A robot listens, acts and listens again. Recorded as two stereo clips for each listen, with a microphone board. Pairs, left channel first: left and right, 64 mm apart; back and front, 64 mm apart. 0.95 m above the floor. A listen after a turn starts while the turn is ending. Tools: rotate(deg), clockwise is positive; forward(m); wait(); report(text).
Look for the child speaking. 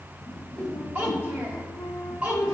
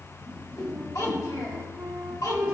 rotate(160)
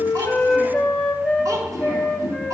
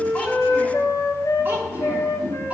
wait()
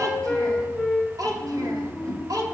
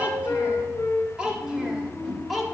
rotate(90)
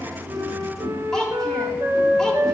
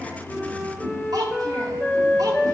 rotate(-10)
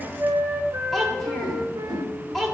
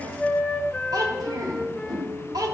report("Facing the child speaking, 1 to 2 m away.")